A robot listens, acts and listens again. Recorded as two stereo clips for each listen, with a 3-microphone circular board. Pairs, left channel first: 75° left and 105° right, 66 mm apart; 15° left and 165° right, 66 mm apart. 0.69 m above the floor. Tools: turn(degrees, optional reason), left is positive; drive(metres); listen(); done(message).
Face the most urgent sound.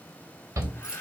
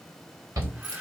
turn(degrees=-145, reason="The shout: 145° right.")
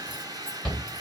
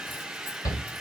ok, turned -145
done("Facing the shout, 2 to 4 m away.")